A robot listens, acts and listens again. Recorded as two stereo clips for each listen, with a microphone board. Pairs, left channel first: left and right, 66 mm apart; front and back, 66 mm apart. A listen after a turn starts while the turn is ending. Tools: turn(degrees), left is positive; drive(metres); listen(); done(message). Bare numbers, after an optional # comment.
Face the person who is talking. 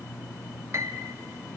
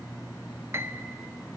listen()
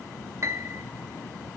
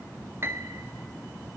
listen()
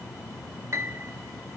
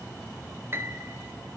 done("I can't make out anyone speaking, only a piano.")